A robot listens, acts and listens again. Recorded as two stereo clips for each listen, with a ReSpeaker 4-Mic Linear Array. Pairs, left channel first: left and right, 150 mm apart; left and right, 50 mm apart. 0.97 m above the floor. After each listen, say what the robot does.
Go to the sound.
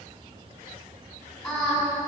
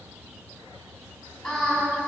Turn 30° left.
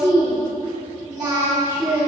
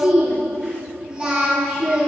Turn 25° right.
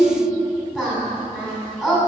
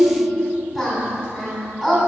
Drive 1.0 m forward.
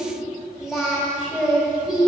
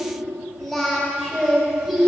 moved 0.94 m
Drive 1.0 m forward.
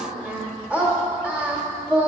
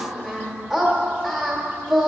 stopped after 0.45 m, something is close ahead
Turn 10° right.
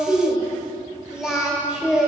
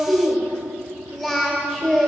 Arrived at the singing, straight ahead.